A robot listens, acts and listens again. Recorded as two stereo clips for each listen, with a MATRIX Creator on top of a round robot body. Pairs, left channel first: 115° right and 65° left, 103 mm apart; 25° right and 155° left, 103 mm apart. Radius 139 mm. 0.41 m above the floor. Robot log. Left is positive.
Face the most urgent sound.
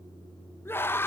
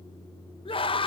note: The scream: 45° right.
cmd yaw -45
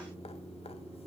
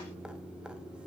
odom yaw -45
cmd idle
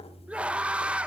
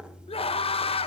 note: The scream is now 10° right.
cmd yaw -10
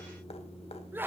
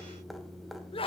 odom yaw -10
end: Facing the scream, 1 to 2 m away.